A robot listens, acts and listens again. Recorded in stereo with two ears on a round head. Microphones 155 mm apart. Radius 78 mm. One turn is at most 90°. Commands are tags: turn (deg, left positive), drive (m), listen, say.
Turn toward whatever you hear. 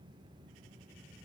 <listen/>
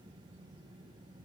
<listen/>
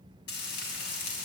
<turn deg="70"/>
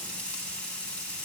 <say>Found it: frying, straight ahead, 2 to 4 m away.</say>